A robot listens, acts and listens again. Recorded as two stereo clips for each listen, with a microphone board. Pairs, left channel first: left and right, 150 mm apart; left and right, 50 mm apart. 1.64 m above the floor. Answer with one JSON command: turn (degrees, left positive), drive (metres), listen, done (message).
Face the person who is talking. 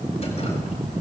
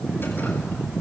{"listen": true}
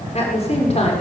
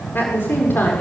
{"turn": 45}
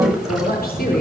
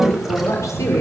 {"listen": true}
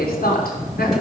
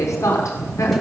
{"turn": 90}
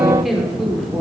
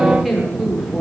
{"done": "Found it: a woman speaking, straight ahead."}